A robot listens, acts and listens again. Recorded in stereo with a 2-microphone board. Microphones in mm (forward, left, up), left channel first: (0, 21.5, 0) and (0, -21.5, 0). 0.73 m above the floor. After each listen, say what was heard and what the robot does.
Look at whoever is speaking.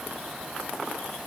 Keep listening.
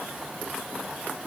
Keep listening.
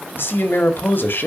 The man speaking: about 55° left or 125° left. Turn 55° left.
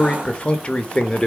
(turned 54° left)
So it is at 25° left. Turn 25° left.
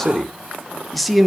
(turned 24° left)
Facing the man speaking, 1 to 2 m away.